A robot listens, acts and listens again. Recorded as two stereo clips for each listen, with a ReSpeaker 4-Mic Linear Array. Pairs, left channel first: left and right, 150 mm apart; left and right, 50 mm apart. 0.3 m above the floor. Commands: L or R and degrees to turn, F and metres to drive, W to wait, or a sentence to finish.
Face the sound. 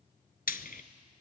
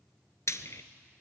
L90
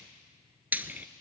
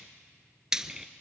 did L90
R10
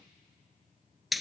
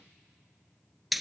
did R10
Facing the frying, under 1 m away.